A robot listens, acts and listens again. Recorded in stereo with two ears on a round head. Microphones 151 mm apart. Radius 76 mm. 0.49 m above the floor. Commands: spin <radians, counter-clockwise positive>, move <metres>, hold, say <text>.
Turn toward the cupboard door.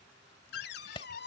spin 1.22
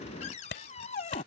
spin 0.70
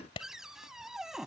say Facing the cupboard door.